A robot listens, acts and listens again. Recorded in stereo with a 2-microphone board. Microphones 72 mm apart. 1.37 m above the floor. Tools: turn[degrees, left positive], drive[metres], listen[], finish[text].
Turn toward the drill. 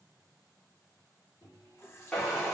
Action: turn[30]
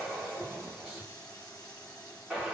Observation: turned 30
Thought: So it is at 20° right.
Action: turn[-20]
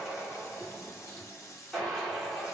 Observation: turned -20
Action: finish[Found it: a drill, straight ahead, 1 to 2 m away.]